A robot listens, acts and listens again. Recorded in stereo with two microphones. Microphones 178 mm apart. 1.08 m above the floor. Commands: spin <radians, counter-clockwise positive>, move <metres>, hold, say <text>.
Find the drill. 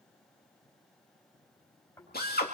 spin 1.05
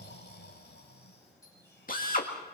spin 0.96
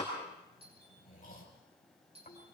say Found it: a drill, straight ahead, 2 to 4 m away.